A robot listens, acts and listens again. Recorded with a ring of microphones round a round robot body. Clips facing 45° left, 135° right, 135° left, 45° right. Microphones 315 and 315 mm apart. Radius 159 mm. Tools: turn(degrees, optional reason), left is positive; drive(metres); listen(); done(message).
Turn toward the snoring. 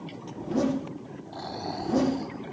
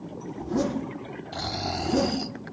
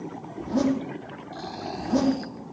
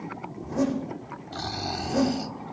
turn(degrees=-105, reason="The snoring: 105° right.")
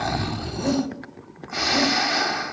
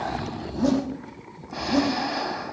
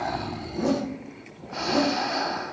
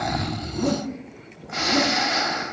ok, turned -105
done("Found it: snoring, straight ahead.")